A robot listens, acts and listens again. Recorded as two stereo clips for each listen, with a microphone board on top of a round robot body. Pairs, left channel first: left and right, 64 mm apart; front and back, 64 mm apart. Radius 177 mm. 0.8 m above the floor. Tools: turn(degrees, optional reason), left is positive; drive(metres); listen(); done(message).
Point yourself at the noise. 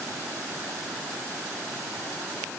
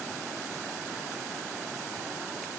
listen()
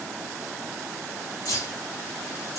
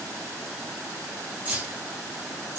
turn(degrees=120, reason="The keys jangling: 120° left.")
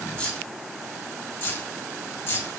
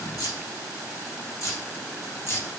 turn(degrees=40, reason="The keys jangling is now 40° left.")
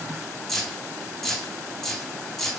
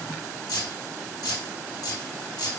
done("Found it: keys jangling, straight ahead, 1 to 2 m away.")